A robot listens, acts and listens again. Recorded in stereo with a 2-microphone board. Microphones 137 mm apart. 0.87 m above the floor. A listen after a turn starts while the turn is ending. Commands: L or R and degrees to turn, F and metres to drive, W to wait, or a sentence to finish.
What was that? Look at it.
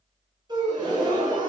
R30
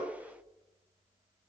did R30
W
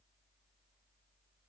I heard a gasp, but can't make it out now. It was about straight ahead or 120° right.